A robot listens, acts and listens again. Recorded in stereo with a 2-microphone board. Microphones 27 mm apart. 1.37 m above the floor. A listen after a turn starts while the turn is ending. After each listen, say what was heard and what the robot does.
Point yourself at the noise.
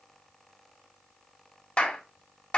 The clap: about 45° left or 135° left. Turn 45° left.
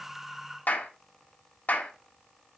So it is at 90° left. Turn 90° left.
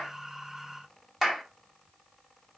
The clap is now 10° right. Turn 10° right.
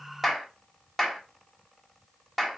Facing the clap, 2 to 4 m away.